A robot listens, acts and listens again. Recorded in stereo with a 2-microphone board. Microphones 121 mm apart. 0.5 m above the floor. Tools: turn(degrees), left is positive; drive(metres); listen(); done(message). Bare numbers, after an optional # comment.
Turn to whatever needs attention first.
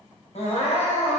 # The crying: about 65° left or 115° left.
turn(65)
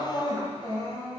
# So it is at 40° left.
turn(40)
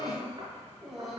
done("Found it: crying, straight ahead.")